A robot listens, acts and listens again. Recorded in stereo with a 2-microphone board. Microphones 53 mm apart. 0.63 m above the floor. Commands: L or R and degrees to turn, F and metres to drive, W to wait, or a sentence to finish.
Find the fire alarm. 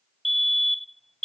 L30
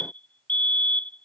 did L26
L150
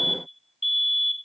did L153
Found it: a fire alarm, straight ahead.